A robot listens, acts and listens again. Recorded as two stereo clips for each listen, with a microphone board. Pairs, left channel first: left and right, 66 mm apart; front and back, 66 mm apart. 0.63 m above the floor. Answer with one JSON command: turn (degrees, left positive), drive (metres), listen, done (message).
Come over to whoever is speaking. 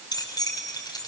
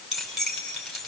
{"listen": true}
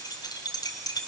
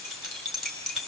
{"listen": true}
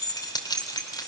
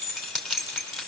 {"done": "I can't make out anyone speaking to turn to."}